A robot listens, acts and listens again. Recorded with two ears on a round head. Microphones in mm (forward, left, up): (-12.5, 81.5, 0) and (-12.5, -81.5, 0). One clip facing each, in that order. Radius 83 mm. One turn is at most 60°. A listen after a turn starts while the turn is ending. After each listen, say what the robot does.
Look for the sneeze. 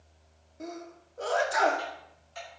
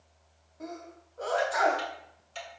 Turn 35° left.
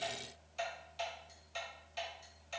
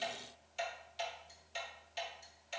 Keep listening.
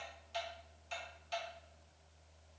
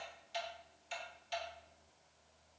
I heard a sneeze, but can't make it out now. It was about straight ahead or 110° left.